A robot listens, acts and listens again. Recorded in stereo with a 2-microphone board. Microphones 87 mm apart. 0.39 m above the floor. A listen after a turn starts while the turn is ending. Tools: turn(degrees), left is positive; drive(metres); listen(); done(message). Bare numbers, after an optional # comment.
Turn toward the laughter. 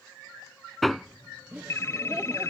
turn(-30)
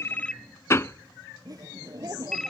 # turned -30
# So it is at 135° right.
turn(-135)
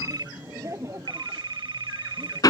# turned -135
# The laughter is now 35° right.
turn(-35)
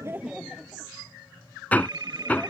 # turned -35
done("Facing the laughter.")